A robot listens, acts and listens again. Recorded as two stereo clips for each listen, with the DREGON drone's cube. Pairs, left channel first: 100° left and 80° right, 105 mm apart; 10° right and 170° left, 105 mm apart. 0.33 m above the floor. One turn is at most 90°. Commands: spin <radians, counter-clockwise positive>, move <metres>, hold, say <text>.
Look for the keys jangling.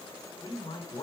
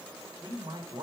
hold
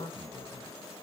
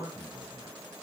hold
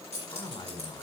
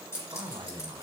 spin -1.22
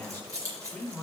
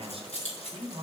spin -0.35
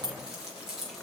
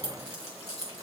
say Facing the keys jangling, 2 to 4 m away.